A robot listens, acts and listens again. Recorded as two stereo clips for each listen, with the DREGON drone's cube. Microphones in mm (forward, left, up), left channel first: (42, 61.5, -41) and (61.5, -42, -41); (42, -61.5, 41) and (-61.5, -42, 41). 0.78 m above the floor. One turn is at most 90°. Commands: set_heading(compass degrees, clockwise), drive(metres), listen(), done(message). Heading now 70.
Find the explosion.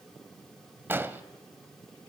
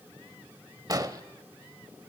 set_heading(160)
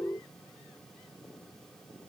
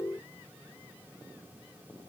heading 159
set_heading(214)
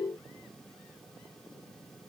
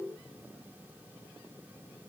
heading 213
done("I heard an explosion from this way, but can't make it out now.")